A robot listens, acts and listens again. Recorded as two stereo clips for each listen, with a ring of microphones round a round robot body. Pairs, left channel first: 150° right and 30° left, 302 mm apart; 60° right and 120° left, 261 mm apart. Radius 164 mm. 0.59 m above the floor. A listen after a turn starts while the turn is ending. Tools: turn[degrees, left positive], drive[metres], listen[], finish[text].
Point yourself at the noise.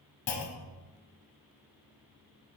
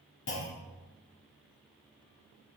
Thought: The clunk: 110° right.
Action: turn[-110]
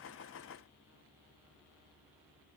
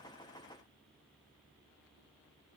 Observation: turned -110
Action: finish[I heard a clunk from this way, but can't make it out now.]